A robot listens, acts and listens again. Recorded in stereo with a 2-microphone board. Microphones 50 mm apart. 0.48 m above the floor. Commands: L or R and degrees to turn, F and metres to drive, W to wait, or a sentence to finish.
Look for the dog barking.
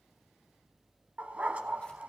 R30
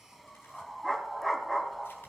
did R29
Found it: a dog barking, straight ahead, 1 to 2 m away.